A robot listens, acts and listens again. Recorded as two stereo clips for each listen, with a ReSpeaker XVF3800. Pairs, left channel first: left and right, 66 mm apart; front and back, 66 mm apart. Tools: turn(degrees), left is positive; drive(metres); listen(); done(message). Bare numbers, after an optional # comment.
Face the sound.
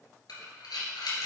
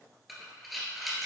# The breathing: 90° left.
turn(90)
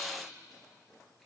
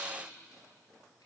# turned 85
listen()
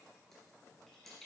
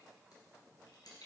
listen()
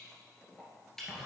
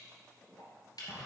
done("Facing the breathing.")